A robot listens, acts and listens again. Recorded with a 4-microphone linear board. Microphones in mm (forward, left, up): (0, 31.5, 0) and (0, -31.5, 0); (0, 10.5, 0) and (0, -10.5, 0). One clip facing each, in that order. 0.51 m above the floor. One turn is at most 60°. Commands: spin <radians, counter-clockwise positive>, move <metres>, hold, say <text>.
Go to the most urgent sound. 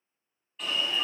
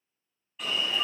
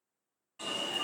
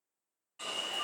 spin 0.52
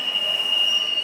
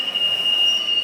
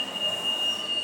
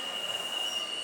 spin 1.05
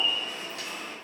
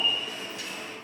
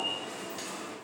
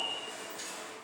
spin 1.05
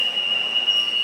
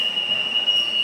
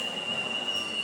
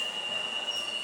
move 1.0
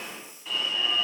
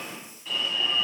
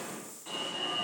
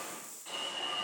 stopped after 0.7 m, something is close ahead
say Arrived at the alarm, straight ahead.